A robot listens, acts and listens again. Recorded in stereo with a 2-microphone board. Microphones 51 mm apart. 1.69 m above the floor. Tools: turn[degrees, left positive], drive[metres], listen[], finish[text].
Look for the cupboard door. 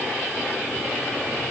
Action: listen[]
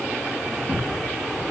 Thought: The cupboard door: about 30° left or 150° left.
Action: turn[30]
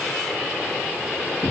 Thought: So it is at 110° left.
Action: turn[110]
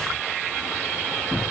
Thought: The cupboard door is now 20° right.
Action: turn[-20]
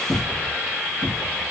Action: finish[Found it: a cupboard door, straight ahead, 1 to 2 m away.]